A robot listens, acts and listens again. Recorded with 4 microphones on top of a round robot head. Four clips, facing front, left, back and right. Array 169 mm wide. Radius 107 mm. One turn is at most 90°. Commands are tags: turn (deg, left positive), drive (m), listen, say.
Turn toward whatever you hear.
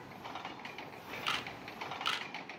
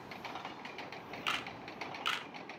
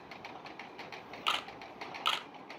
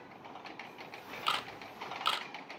<turn deg="-90"/>
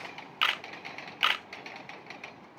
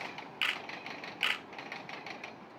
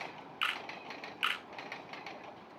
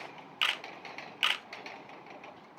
<turn deg="-15"/>
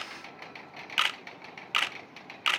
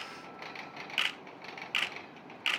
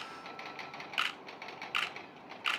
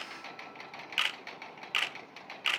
<say>Facing the camera shutter, 1 to 2 m away.</say>